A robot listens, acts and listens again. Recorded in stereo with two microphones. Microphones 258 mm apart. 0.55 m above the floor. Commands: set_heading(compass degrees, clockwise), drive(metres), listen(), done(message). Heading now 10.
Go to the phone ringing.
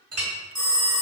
set_heading(355)
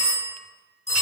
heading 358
set_heading(203)
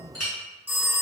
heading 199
set_heading(209)
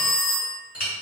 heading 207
drive(1.0)
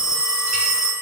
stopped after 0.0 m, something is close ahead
done("Blocked. The phone ringing is further on, straight ahead.")